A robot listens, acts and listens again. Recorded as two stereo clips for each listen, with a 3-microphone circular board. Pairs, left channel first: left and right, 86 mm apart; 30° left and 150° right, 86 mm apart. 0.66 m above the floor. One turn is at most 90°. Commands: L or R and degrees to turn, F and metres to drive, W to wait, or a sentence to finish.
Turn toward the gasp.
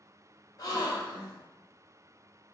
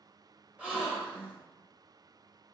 L90
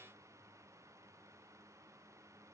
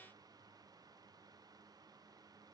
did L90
L45
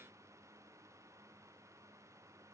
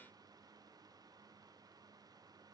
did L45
I heard a gasp from this way, but can't make it out now.